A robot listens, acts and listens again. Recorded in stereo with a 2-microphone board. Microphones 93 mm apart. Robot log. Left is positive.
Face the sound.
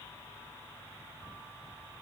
cmd idle
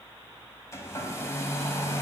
note: The hair dryer: about 35° left or 145° left.
cmd yaw +35
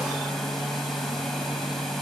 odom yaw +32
end: Facing the hair dryer, 1 to 2 m away.